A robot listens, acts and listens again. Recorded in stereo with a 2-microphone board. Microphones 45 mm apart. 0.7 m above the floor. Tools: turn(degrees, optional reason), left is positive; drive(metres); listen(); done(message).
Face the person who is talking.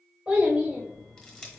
turn(degrees=-25, reason="The child speaking: about 25° right or 155° right.")
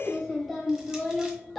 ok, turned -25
done("Found it: a child speaking, straight ahead.")